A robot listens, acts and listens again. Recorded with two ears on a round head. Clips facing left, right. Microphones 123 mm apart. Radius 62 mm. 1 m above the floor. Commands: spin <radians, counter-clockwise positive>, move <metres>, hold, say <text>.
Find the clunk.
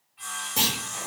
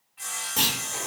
spin 0.52
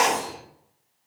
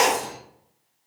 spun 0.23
hold
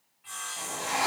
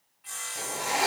say I heard a clunk, but can't make it out now. It was about 10° right or 160° left.